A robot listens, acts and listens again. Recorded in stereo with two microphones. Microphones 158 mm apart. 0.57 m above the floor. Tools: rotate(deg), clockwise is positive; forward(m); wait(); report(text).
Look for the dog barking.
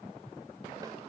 wait()
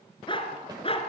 rotate(-35)
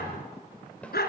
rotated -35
rotate(-95)
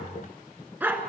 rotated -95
rotate(15)
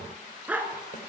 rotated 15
rotate(10)
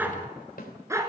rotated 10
rotate(20)
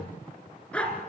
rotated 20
report("Facing the dog barking, 2 to 4 m away.")